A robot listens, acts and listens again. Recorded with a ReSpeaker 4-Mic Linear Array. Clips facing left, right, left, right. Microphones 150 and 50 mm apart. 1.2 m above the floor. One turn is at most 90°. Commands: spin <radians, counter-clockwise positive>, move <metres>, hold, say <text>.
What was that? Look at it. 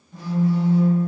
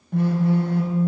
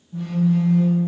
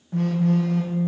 spin -1.13
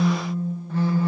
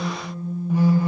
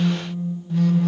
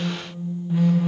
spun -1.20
spin -0.26
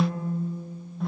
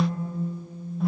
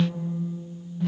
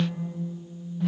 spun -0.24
say Found it: a phone buzzing, straight ahead, under 1 m away.